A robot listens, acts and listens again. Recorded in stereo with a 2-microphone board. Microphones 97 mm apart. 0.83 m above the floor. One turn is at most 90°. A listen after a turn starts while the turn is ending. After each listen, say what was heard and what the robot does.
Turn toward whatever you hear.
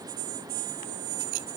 Keep listening.
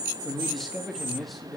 Turn 30° left.
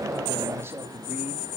So it is at 30° right. Turn 30° right.
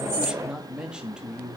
The man speaking is now 10° right. Turn 10° right.
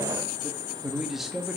Found it: a man speaking, straight ahead.